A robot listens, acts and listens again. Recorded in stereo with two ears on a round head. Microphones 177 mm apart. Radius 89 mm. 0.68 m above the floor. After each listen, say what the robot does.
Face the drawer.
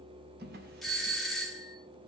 Turn 60° right.
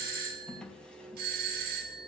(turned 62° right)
Facing the drawer.